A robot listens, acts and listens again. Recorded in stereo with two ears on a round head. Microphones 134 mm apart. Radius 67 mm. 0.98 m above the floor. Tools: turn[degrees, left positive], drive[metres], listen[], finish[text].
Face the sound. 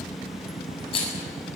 Thought: The rattle: about 40° left or 140° left.
Action: turn[40]
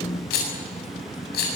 Thought: So it is at 100° left.
Action: turn[100]
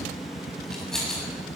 Action: finish[Facing the rattle.]